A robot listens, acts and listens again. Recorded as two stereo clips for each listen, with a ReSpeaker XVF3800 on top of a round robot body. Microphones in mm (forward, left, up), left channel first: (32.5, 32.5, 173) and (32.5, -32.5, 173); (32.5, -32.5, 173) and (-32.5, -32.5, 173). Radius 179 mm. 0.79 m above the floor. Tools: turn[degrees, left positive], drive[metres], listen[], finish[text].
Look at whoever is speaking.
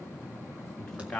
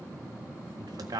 Thought: The man speaking: 170° left.
Action: turn[170]
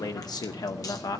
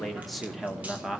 Thought: The man speaking is now 100° left.
Action: turn[100]
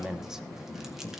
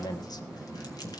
Action: finish[Facing the man speaking.]